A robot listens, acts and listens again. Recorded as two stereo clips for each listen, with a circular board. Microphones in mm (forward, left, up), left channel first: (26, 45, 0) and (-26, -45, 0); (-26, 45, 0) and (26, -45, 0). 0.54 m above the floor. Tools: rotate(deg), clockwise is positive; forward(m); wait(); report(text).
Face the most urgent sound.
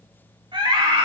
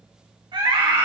rotate(90)
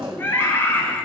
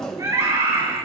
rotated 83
report("Facing the scream.")